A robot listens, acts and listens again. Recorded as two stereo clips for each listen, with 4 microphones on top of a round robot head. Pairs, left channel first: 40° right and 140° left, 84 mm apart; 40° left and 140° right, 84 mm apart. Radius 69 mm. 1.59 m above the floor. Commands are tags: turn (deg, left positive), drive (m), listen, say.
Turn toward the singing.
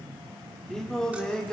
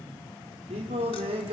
<turn deg="-120"/>
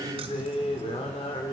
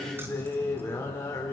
<turn deg="-20"/>
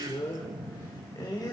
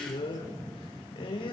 <turn deg="10"/>
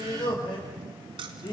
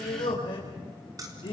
<say>Facing the singing.</say>